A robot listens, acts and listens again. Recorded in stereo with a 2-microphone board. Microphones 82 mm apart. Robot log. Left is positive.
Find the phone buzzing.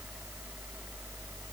cmd idle
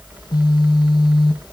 note: The phone buzzing: about 60° left or 120° left.
cmd yaw +60
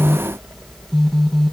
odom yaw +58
end: Facing the phone buzzing.